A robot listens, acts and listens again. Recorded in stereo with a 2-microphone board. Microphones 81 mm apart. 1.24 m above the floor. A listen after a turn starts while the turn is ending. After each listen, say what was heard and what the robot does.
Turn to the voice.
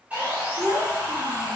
The child speaking: about 65° right or 115° right. Turn 65° right.
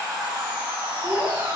So it is at 50° right. Turn 50° right.
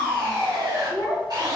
The child speaking is now 15° right. Turn 15° right.
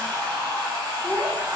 Facing the child speaking, 1 to 2 m away.